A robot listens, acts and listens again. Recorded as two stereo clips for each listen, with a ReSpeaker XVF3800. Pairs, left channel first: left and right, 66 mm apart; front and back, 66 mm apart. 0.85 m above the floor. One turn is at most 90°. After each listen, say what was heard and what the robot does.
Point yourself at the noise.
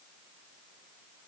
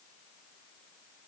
Keep listening.
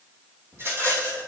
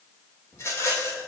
The rattle: 45° right. Turn 45° right.
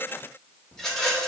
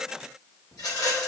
Found it: a rattle, straight ahead.